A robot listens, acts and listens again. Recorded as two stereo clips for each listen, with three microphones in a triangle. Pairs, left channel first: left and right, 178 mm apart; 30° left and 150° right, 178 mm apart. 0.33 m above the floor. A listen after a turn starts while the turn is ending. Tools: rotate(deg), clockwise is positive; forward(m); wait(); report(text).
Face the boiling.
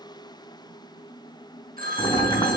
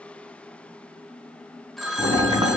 rotate(-150)
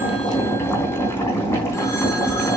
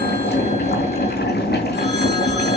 rotate(-15)
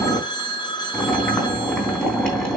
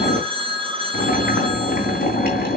report("Facing the boiling.")